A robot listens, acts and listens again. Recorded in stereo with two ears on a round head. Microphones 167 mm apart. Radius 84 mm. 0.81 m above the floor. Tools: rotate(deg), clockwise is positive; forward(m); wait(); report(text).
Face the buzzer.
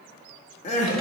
wait()
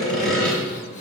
wait()
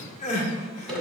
report("I can't make out a buzzer, only sawing and crying.")